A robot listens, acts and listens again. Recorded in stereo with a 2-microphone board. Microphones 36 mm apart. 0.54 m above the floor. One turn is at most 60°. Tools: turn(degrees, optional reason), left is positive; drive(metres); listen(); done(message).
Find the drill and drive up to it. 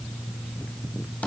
listen()
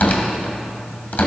listen()
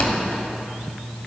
done("I can't make out a drill, only tearing paper.")